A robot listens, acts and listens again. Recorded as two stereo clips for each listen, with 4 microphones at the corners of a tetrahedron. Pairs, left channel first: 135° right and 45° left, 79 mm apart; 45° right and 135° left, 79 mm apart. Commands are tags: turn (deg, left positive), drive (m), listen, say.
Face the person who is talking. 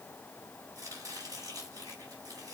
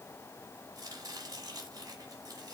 <listen/>
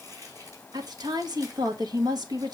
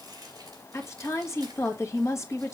<turn deg="10"/>
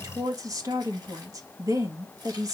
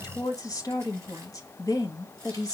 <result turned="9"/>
<say>Facing the woman speaking.</say>